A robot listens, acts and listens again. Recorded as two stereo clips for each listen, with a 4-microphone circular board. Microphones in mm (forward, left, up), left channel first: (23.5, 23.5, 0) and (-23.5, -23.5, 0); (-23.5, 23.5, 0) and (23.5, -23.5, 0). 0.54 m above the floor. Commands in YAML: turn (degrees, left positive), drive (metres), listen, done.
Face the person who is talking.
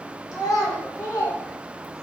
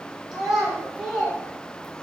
turn: 45
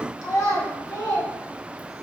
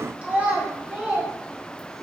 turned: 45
turn: 35
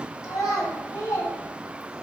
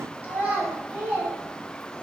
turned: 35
turn: 25
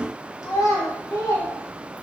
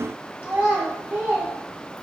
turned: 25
turn: 10
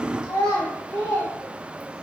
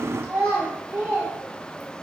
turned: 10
done: "Found it: a child speaking, straight ahead."